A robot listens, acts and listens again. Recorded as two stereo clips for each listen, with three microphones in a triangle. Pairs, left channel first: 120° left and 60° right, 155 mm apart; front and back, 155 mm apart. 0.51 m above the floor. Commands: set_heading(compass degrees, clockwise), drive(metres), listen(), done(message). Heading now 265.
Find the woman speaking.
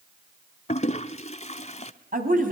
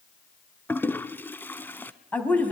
set_heading(345)
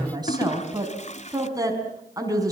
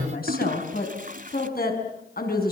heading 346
set_heading(336)
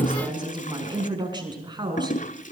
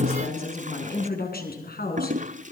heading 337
done("Found it: a woman speaking, straight ahead, over 4 m away.")